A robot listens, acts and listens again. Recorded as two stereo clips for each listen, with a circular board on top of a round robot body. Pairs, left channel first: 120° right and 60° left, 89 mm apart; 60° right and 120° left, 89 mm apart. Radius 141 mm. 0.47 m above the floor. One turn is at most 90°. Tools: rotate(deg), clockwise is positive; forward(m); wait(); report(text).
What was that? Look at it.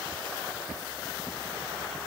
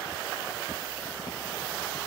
wait()
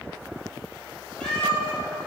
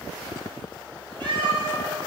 rotate(-90)
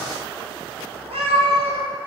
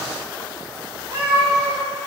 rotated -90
rotate(-55)
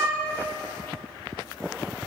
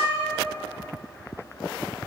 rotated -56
report("Found it: a cat meowing, straight ahead, 2 to 4 m away.")